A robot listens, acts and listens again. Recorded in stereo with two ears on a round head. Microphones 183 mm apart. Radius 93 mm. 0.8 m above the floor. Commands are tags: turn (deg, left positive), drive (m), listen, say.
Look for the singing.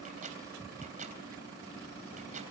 <listen/>
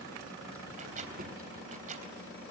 <listen/>
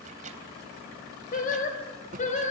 <turn deg="40"/>
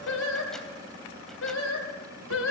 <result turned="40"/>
<turn deg="105"/>
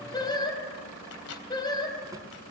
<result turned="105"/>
<turn deg="20"/>
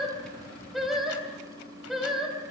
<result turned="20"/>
<say>Found it: singing, straight ahead.</say>